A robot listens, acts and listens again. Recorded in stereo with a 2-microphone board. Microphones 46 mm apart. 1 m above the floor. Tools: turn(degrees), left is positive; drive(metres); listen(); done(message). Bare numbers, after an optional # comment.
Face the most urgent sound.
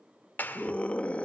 # The scream: about 25° left or 155° left.
turn(25)
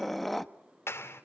done("Facing the scream.")